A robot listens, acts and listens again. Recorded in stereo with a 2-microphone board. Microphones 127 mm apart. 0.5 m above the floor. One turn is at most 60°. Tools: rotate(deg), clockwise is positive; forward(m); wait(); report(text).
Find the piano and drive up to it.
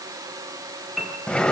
rotate(-30)
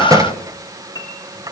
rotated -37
rotate(-60)
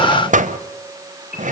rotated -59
rotate(-60)
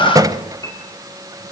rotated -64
rotate(-20)
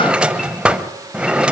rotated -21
wait()
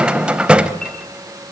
wait()
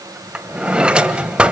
report("I heard a piano from this way, but can't make it out now. I did not reach it.")